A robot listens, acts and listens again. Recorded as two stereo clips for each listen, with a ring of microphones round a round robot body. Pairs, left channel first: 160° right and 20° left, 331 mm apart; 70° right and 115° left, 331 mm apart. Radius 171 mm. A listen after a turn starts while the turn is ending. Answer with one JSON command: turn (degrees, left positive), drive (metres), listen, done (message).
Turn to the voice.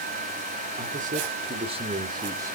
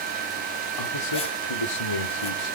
{"turn": -55}
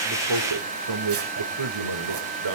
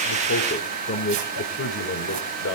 {"turn": -10}
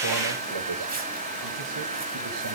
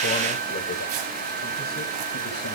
{"listen": true}
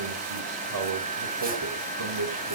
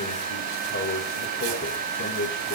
{"done": "Found it: a man speaking, straight ahead, over 4 m away."}